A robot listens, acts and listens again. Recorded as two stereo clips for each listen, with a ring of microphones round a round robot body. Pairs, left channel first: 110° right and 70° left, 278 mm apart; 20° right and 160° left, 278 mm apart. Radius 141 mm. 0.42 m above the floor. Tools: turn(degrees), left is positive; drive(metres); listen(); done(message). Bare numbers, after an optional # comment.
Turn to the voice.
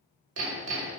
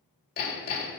listen()
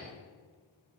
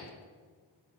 listen()
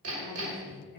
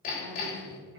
# The woman speaking: 165° right.
turn(-165)
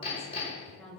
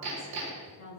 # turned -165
# The woman speaking is now 25° right.
turn(-25)
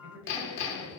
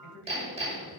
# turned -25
# The woman speaking is now 25° left.
turn(25)
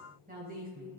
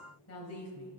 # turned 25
# The woman speaking is now 10° left.
turn(10)
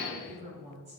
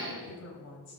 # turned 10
done("Found it: a woman speaking, straight ahead.")